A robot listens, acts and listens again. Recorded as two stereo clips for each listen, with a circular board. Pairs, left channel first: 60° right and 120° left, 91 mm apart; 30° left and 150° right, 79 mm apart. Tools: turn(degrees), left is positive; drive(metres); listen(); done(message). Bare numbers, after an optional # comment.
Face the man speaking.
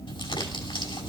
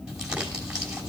listen()
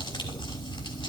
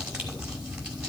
listen()
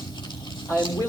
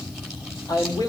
done("Facing the man speaking.")